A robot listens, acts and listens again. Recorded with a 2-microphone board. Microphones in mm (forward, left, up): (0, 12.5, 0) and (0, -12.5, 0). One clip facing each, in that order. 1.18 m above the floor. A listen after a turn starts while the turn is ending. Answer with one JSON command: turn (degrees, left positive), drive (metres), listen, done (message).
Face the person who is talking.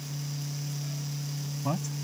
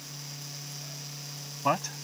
{"turn": -50}
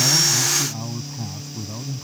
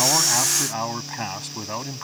{"turn": -80}
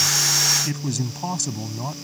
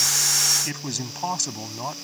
{"turn": -15}
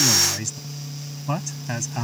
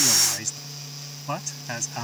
{"done": "Found it: a man speaking, straight ahead."}